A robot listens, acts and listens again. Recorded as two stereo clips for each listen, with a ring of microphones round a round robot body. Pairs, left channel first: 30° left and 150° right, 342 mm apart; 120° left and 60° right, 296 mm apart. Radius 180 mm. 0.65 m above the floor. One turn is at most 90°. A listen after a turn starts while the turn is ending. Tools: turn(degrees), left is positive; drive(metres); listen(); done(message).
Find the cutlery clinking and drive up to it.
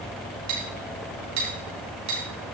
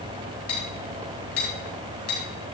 turn(degrees=90)
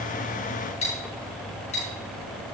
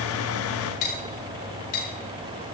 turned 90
turn(degrees=90)
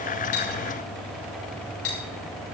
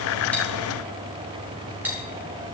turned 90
turn(degrees=25)
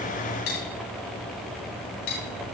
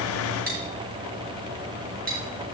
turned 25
drive(metres=1.0)
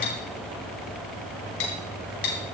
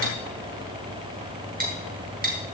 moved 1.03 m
drive(metres=1.0)
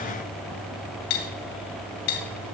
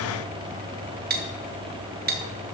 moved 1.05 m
drive(metres=1.0)
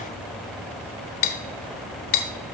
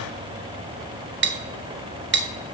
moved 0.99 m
drive(metres=1.0)
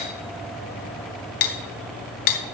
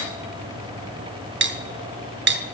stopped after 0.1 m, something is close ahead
done("Arrived at the cutlery clinking, straight ahead.")